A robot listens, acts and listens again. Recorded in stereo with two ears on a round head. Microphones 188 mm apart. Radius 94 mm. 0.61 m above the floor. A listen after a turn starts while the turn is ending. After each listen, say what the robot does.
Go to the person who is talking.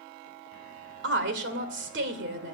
Turn 60° right.
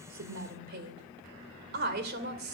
Turn 55° right.
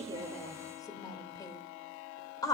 Turn 20° left.
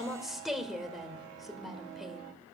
Drive 1.0 m forward.
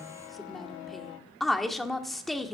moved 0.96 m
Drive 1.0 m forward.
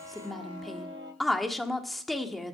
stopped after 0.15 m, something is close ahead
Arrived at the woman speaking, straight ahead.